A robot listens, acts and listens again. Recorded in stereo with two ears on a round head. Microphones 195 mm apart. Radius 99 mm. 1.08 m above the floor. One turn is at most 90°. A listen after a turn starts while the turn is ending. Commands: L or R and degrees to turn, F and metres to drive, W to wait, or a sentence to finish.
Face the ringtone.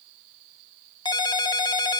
L20
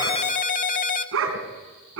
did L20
L90
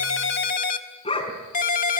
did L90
L40
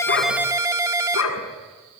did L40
R15
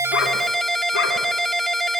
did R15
Found it: a ringtone, straight ahead.